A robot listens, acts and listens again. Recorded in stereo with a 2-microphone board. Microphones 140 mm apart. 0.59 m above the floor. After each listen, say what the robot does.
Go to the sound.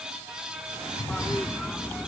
Turn 30° left.
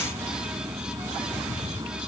Turn 25° right.
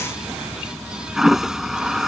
Drive 1.0 m forward.
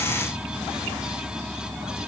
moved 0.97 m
Drive 1.0 m forward.
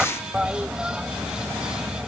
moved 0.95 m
Drive 1.0 m forward.
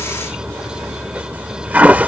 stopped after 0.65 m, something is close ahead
Turn 10° right.
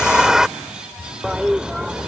Arrived at the toilet flushing, straight ahead.